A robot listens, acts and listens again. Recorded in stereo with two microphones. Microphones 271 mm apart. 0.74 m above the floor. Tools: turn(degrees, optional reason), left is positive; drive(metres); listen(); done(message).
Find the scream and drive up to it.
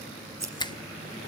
listen()
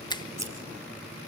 listen()
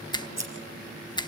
done("I can't make out a scream to turn to.")